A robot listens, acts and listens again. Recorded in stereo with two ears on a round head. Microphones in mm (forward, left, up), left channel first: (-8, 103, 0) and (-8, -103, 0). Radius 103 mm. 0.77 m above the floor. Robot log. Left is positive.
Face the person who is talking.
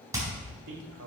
note: The man speaking: about 55° right or 125° right.
cmd yaw -55
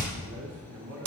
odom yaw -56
note: So it is at 60° right.
cmd yaw -60
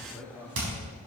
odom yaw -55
end: Facing the man speaking.